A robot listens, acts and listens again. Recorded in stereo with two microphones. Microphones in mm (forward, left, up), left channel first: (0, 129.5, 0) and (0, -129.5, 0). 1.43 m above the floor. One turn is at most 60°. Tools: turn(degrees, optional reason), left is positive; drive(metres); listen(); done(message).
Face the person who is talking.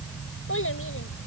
turn(degrees=55, reason="The child speaking: about 55° left or 125° left.")
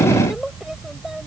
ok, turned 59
done("Facing the child speaking.")